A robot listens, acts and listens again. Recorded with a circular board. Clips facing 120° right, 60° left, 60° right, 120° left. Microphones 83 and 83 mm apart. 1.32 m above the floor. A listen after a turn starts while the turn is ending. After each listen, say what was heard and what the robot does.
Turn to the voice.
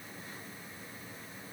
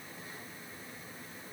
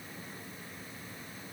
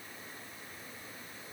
Keep listening.
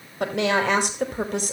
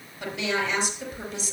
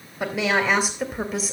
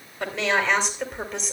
The woman speaking: 145° right. Turn 145° right.
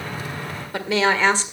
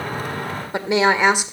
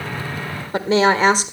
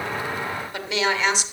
The woman speaking is now 15° right. Turn 15° right.
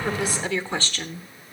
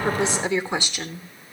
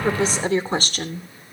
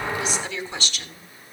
The woman speaking is now 20° right. Turn 20° right.
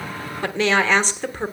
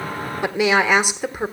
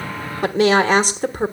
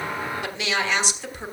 The woman speaking is now 20° right. Turn 20° right.
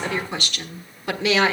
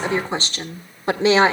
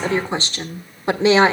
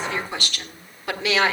Facing the woman speaking, 1 to 2 m away.